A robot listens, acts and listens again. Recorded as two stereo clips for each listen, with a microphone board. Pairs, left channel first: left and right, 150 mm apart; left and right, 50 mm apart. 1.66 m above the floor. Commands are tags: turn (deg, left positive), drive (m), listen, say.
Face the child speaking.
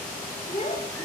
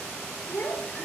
<turn deg="45"/>
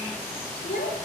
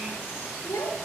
<turn deg="85"/>
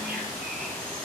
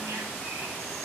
<listen/>
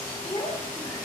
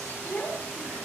<turn deg="30"/>
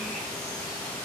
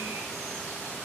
<listen/>
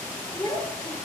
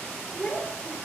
<turn deg="20"/>
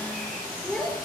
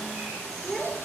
<say>Found it: a child speaking, straight ahead, over 4 m away.</say>